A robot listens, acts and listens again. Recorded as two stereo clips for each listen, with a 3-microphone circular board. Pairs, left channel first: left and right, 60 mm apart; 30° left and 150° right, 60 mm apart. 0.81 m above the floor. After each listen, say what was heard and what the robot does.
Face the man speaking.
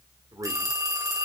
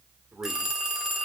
The man speaking: 100° right. Turn 100° right.
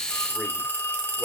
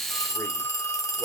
Keep listening.
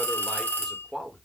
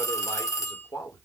Facing the man speaking, 2 to 4 m away.